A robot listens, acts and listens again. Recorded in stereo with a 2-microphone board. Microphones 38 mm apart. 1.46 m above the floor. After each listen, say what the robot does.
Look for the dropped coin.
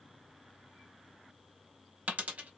Turn 40° right.
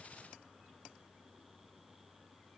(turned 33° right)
Keep listening.
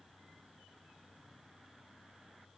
I heard a dropped coin, but can't make it out now. It was about 10° right or 105° right.